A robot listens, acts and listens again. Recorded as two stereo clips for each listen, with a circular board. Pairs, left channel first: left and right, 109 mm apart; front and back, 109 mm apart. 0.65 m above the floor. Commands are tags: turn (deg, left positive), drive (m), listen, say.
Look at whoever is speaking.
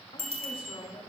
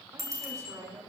<turn deg="125"/>
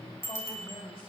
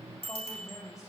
<turn deg="55"/>
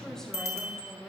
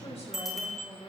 <turn deg="10"/>
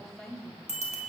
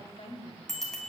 <say>Facing the woman speaking, over 4 m away.</say>